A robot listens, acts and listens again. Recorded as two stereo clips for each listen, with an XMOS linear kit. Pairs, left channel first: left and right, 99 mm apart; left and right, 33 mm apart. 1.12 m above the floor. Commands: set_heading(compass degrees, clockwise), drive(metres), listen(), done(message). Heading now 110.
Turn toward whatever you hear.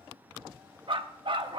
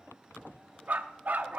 set_heading(165)
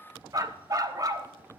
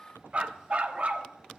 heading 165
set_heading(210)
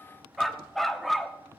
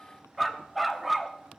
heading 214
done("Facing the dog barking, under 1 m away.")